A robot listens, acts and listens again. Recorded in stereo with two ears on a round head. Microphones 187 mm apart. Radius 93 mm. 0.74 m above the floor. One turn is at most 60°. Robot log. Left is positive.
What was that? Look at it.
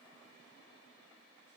cmd idle
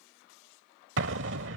note: The explosion: about 60° right or 120° right.
cmd yaw -60
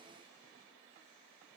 cmd idle
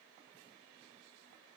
end: I heard an explosion, but can't make it out now. It was about straight ahead or 60° right.